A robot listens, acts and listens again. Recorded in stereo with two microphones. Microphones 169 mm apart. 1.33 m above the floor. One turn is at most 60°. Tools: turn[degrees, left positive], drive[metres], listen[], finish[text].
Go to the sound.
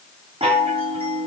Thought: The chime: about 35° right or 145° right.
Action: turn[-35]
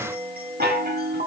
Thought: So it is at 110° right.
Action: turn[-60]
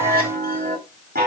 Thought: The chime is now 65° right.
Action: turn[-60]
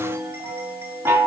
Thought: The chime is now 15° right.
Action: turn[-15]
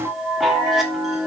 Action: drive[1.0]
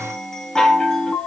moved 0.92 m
Action: drive[1.0]
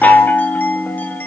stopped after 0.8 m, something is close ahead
Thought: The chime is now 10° left.
Action: turn[10]
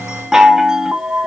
Action: finish[Arrived at the chime, straight ahead.]